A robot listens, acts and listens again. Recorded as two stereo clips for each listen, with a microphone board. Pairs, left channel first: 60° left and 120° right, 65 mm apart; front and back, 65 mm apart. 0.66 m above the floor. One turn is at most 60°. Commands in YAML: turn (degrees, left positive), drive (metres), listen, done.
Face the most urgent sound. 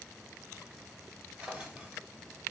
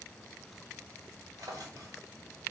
listen: true
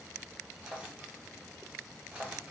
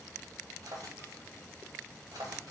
listen: true
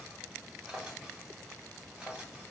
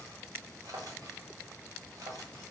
done: "I can't make out anything urgent, only a drawer."